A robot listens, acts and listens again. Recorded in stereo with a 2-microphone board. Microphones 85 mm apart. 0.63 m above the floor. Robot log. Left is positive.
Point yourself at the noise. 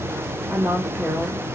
cmd yaw -30
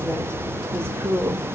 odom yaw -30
note: So it is at 140° right.
cmd yaw -140
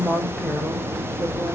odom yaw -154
note: The woman speaking is now 10° left.
cmd yaw +10
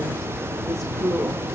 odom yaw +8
end: Facing the woman speaking.